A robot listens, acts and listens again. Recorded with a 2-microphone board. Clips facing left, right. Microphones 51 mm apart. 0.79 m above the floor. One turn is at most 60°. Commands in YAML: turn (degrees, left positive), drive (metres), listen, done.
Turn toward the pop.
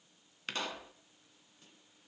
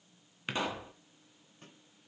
turn: -30
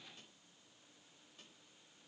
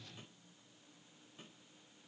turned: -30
listen: true
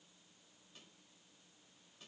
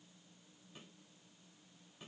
done: "I heard a pop, but can't make it out now. It was about 15° left or 135° right."